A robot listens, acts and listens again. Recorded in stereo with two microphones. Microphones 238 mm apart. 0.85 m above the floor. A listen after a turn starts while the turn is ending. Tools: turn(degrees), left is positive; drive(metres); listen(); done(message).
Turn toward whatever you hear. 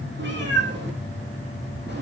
turn(degrees=-50)
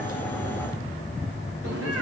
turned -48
turn(degrees=-80)
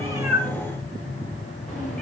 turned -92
turn(degrees=15)
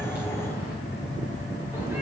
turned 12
listen()
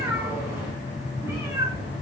turn(degrees=-10)
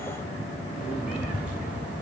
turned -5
listen()
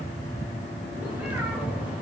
listen()
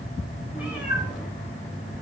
done("Found it: a cat meowing, straight ahead.")